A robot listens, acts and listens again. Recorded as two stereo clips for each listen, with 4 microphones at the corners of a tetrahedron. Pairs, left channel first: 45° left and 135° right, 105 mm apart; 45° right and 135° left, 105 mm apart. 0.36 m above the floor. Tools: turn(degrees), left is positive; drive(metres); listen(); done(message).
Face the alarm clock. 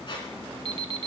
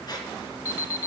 turn(degrees=-100)
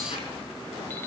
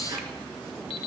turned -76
turn(degrees=-25)
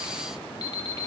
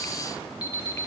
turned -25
done("Found it: an alarm clock, straight ahead, under 1 m away.")